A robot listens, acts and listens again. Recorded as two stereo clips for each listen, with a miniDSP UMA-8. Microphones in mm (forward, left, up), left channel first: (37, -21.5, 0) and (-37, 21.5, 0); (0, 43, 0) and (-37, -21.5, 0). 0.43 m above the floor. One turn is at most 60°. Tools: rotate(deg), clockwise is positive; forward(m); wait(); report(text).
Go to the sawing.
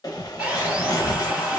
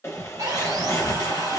rotate(60)
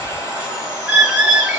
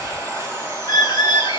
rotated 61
rotate(60)
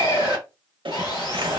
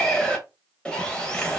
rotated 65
rotate(10)
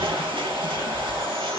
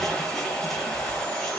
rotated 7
wait()
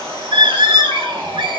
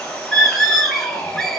forward(1.0)
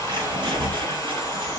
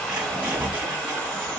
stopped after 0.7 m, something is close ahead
wait()
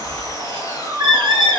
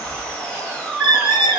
report("I am next to the sawing.")